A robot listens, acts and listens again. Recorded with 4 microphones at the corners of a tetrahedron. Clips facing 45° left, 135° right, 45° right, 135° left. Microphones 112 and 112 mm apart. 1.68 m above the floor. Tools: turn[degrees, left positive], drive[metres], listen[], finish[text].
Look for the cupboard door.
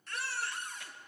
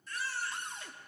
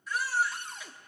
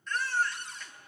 Thought: The cupboard door: 75° right.
Action: turn[-75]
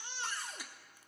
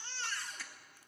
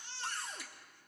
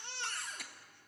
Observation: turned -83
Thought: The cupboard door is now 10° left.
Action: turn[10]
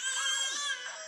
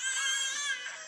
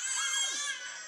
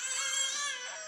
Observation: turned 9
Action: listen[]
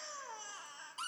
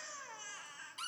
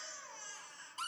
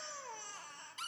Action: finish[Facing the cupboard door, 1 to 2 m away.]